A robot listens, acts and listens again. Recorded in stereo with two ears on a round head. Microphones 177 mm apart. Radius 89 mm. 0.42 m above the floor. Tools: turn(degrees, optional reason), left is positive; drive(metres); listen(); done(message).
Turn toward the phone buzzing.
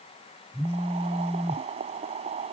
turn(degrees=15, reason="The phone buzzing: about 15° left or 165° left.")
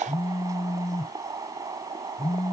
turn(degrees=145, reason="So it is at 145° left.")
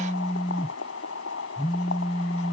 turn(degrees=30, reason="The phone buzzing is now 30° left.")
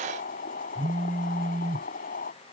done("Found it: a phone buzzing, straight ahead.")